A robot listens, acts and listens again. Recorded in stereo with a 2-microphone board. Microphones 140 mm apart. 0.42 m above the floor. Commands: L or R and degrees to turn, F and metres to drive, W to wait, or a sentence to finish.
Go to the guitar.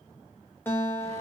L30
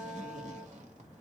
R15
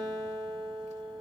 F1.0
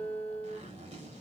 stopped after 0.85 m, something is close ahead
L10
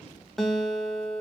I am next to the guitar.